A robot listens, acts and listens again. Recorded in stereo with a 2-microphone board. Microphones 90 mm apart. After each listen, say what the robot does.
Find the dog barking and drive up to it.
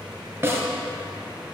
Keep listening.
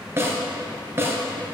Keep listening.
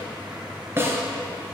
I can't make out a dog barking, only a snare drum.